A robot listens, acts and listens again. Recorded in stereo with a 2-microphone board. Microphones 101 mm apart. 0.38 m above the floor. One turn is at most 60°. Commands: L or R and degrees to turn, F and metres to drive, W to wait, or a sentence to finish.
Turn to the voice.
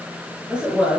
R30
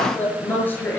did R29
L20
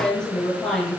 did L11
L10
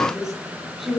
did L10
Found it: a woman speaking, straight ahead, over 4 m away.